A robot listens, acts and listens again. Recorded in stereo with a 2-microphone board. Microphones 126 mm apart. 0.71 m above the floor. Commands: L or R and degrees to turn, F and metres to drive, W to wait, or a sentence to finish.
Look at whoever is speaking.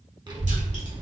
R35
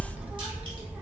R10
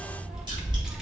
Facing the child speaking.